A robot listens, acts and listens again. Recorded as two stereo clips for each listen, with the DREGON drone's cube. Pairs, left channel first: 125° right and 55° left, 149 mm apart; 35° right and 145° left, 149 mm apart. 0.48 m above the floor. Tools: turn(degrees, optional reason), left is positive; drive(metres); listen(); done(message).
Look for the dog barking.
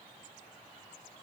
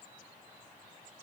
listen()
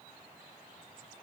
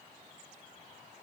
listen()
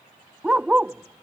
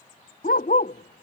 turn(degrees=-25, reason="The dog barking: 25° right.")
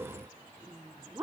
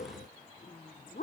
turn(degrees=-15, reason="The dog barking is now 15° right.")
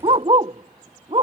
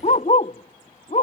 done("Found it: a dog barking, straight ahead.")